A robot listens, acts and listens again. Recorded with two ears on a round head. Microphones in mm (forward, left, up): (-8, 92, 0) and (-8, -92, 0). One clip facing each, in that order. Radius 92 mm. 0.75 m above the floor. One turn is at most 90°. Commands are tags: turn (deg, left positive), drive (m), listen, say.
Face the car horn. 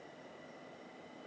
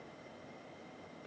<listen/>
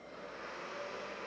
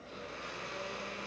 <listen/>
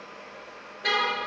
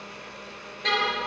<turn deg="30"/>
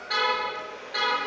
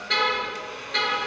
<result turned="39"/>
<turn deg="-35"/>
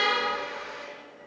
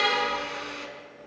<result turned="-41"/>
<turn deg="10"/>
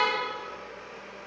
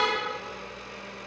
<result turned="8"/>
<say>Found it: a car horn, straight ahead.</say>